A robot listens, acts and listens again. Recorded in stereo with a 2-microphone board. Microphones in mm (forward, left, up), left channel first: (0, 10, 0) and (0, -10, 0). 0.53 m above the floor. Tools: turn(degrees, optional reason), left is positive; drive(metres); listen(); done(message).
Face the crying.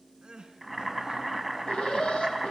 turn(degrees=-40, reason="The crying: about 40° right or 140° right.")
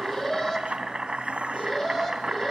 listen()
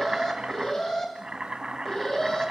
listen()
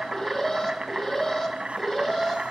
done("I heard crying, but can't make it out now. It was about straight ahead or 100° right.")